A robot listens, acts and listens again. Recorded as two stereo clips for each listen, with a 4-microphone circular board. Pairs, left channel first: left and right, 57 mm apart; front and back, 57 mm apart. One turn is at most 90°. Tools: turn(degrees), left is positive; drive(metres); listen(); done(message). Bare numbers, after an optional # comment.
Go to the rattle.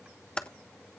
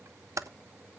listen()
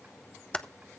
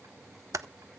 listen()
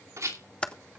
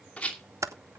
# The rattle: 70° right.
turn(-70)
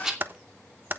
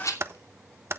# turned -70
# The rattle is now 15° right.
turn(-15)
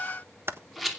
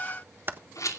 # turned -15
drive(1.0)
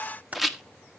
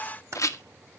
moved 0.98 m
drive(1.0)
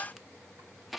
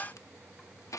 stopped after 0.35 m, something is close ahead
done("I am next to the rattle.")